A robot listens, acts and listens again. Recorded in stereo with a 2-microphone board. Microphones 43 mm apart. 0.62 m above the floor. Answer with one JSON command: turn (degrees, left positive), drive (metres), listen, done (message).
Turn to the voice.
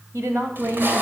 {"turn": -75}
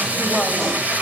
{"listen": true}
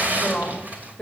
{"turn": 20}
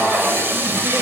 {"listen": true}
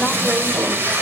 {"listen": true}
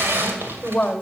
{"turn": 25}
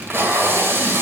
{"listen": true}
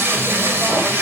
{"listen": true}
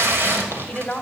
{"turn": 20}
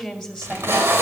{"done": "Facing the woman speaking."}